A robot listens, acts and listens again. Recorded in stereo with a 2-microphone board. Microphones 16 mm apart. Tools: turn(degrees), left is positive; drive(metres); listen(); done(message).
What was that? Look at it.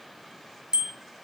turn(degrees=-90)
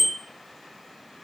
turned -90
done("Found it: a bicycle bell, straight ahead, 2 to 4 m away.")